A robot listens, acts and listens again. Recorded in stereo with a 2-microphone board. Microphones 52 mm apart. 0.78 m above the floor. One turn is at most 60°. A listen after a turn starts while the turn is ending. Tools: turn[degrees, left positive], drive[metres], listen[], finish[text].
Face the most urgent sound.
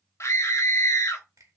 Thought: The scream: about 60° left or 120° left.
Action: turn[60]
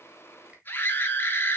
Thought: So it is at 45° left.
Action: turn[45]
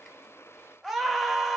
Action: finish[Facing the scream, 1 to 2 m away.]